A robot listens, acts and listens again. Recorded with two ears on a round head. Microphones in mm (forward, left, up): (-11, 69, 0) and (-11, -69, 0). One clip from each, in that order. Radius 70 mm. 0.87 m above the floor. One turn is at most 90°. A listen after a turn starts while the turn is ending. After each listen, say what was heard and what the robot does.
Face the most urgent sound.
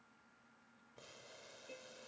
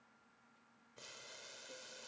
Keep listening.
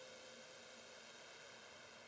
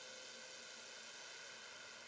Keep listening.
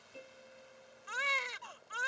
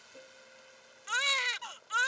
The baby crying: about 60° right or 120° right. Turn 60° right.
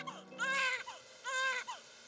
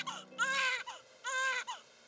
So it is at 20° right. Turn 20° right.
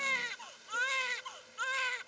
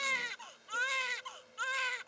Facing the baby crying.